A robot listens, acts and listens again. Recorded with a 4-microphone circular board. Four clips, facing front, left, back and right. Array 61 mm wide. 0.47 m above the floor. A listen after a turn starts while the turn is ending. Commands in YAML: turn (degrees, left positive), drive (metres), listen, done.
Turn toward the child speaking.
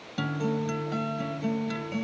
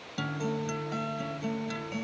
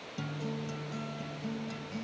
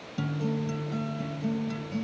listen: true
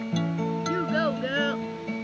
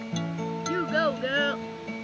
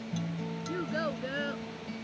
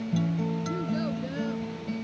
turn: 60
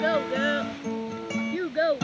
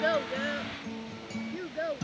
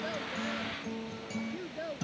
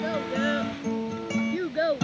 turn: -20
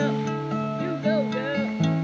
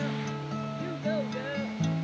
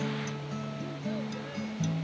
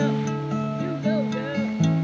listen: true
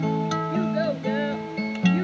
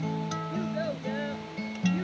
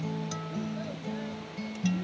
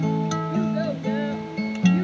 listen: true
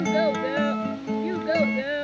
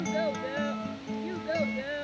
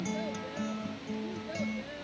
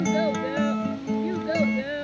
done: "Facing the child speaking."